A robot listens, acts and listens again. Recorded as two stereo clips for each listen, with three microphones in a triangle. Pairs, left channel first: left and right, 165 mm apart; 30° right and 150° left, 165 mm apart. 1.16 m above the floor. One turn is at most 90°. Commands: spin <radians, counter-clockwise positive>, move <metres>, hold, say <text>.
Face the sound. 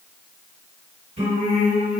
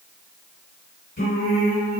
spin -0.70
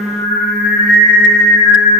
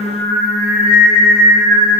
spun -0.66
say Facing the singing, 1 to 2 m away.